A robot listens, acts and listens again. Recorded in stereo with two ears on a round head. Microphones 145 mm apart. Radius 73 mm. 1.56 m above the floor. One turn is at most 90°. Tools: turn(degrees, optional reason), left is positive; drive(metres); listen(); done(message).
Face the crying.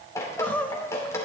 turn(degrees=30)
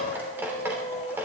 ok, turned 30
turn(degrees=90, reason="So it is at 135° left.")
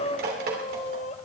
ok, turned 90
turn(degrees=45, reason="The crying is now 45° left.")
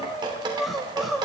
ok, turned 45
done("Facing the crying.")